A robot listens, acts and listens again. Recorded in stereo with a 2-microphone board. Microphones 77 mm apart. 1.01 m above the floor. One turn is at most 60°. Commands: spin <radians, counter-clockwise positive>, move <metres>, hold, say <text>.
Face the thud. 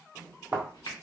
spin -0.35
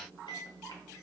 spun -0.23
hold
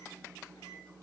say I heard a thud, but can't make it out now. It was about 10° right or 145° right.